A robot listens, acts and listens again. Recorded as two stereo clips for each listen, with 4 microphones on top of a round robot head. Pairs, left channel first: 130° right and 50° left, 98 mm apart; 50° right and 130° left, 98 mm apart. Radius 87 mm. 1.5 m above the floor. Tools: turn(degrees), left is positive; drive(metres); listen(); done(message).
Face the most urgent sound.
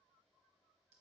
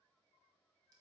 listen()
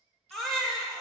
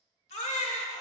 turn(degrees=-40)
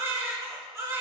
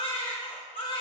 turn(degrees=-10)
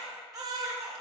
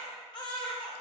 done("Found it: a baby crying, straight ahead.")